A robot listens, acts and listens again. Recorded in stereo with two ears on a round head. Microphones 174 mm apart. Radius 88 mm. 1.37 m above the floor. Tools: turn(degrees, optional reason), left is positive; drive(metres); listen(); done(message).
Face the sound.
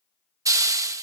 turn(degrees=-20, reason="The hiss: about 20° right or 160° right.")
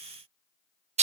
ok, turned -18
turn(degrees=-145, reason="So it is at 145° right.")
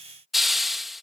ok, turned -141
done("Facing the hiss.")